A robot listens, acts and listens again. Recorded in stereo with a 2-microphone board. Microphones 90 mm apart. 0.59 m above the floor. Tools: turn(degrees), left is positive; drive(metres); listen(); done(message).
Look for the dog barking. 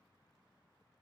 listen()
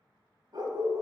turn(degrees=-40)
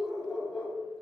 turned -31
turn(degrees=15)
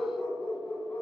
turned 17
turn(degrees=25)
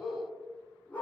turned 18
turn(degrees=20)
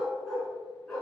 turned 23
done("Facing the dog barking, 2 to 4 m away.")